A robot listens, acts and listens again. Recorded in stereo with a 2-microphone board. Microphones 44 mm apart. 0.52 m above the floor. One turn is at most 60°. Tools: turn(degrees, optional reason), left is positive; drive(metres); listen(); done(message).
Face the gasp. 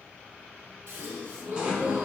turn(degrees=-60, reason="The gasp: about 70° right or 110° right.")
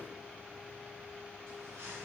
listen()
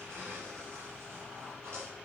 done("I heard a gasp, but can't make it out now. It was about 10° right or 50° right.")